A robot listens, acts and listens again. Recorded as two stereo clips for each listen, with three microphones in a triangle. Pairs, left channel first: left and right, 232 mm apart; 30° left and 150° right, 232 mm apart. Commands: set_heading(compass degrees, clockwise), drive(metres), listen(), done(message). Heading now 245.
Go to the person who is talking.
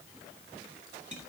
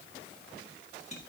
listen()
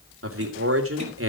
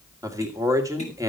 set_heading(320)
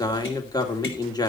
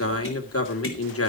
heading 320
set_heading(305)
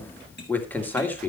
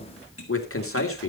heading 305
set_heading(295)
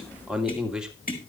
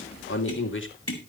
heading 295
drive(1.0)
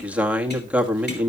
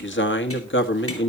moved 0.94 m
drive(1.0)
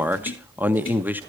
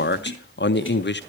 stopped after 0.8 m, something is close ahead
set_heading(305)
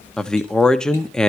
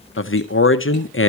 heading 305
done("Arrived at the man speaking, straight ahead.")